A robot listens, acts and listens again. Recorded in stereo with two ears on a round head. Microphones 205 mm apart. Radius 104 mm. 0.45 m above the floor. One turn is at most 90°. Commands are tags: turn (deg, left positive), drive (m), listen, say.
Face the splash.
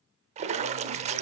<turn deg="-30"/>
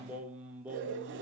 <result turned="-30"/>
<listen/>
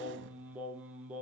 <say>I heard a splash, but can't make it out now. It was about straight ahead or 120° right.</say>